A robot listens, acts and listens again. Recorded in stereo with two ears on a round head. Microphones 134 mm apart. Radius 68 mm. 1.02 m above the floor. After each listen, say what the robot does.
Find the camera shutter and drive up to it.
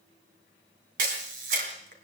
Turn 60° right.
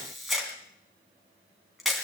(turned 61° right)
Drive 1.0 m forward.
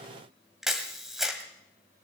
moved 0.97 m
Drive 1.0 m forward.
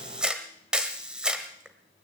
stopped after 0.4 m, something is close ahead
I am next to the camera shutter.